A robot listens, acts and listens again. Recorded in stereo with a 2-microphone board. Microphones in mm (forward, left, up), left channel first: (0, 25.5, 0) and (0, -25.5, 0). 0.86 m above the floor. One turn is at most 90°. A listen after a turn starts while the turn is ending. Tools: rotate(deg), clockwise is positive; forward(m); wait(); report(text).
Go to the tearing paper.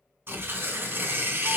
rotate(45)
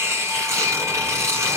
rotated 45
rotate(90)
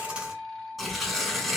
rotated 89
forward(1.0)
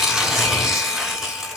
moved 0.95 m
rotate(10)
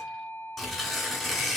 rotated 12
forward(1.0)
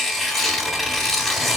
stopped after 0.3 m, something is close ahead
report("I am next to the tearing paper.")